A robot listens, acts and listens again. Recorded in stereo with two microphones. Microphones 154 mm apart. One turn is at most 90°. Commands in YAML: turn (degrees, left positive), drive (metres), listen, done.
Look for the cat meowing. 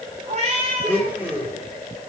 turn: -45
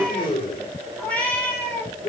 turn: 10
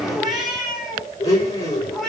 done: "Found it: a cat meowing, straight ahead."